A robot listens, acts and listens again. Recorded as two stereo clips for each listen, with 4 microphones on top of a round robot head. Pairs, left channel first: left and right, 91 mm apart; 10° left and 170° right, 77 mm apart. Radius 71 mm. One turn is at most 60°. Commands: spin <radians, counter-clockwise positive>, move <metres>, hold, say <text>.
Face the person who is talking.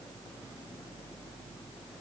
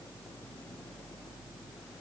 hold
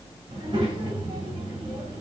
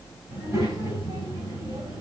spin -1.05
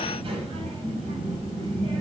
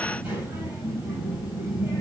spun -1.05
spin -1.05
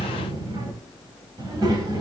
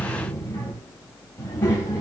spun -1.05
spin -0.87
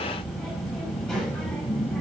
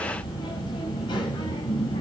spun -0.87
say Found it: a child speaking, straight ahead.